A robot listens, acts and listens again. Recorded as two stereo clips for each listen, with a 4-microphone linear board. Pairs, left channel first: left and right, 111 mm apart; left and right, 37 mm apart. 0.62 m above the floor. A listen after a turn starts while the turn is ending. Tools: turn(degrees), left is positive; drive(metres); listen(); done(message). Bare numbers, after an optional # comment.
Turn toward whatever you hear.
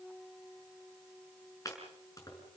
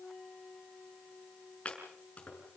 # The chopping: about 30° left or 150° left.
turn(30)
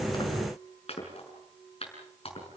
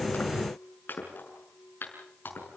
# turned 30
# So it is at 120° left.
turn(120)
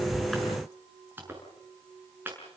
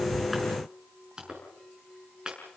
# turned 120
# The chopping is now 20° right.
turn(-20)
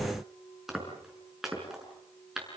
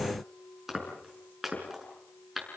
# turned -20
done("Found it: chopping, straight ahead.")